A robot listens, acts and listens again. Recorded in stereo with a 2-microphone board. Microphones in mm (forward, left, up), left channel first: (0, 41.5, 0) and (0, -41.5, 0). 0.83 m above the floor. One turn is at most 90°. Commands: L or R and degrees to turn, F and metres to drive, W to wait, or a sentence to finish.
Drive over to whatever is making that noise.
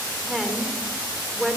R30
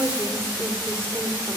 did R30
R90
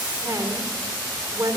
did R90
R45
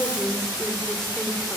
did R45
F1.0
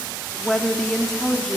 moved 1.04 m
L10
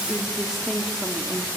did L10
F1.0
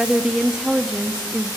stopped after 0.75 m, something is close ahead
R10
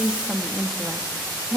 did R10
Arrived at the woman speaking, straight ahead.